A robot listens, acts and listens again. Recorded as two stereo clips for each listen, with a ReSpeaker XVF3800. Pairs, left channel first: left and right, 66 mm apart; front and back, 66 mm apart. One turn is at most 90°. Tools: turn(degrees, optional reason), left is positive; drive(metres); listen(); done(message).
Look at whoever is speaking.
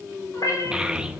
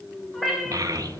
turn(degrees=-90, reason="The child speaking: 165° right.")
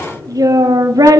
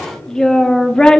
turn(degrees=-80, reason="The child speaking is now 80° right.")
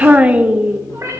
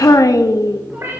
turn(degrees=-20, reason="The child speaking is now 20° right.")
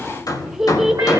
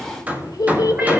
done("Facing the child speaking, 1 to 2 m away.")